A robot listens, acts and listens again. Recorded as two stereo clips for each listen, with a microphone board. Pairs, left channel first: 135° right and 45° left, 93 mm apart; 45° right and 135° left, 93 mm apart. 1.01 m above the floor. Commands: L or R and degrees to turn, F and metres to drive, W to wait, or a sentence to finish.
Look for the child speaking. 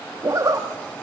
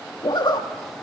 W
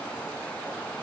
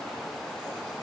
W
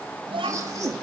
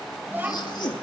L65
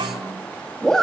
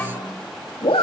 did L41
L25
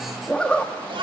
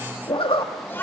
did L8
L25
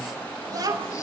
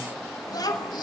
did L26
Found it: a child speaking, straight ahead.